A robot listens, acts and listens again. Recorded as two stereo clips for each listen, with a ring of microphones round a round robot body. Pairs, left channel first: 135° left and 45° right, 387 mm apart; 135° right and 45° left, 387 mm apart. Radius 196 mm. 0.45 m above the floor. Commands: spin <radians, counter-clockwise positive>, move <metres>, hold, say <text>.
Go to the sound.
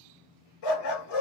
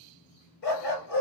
spin 2.79
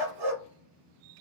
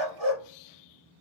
spin -0.17
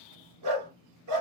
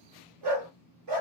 move 1.0
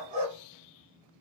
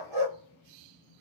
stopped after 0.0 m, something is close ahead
say Blocked. The dog barking is further on, straight ahead.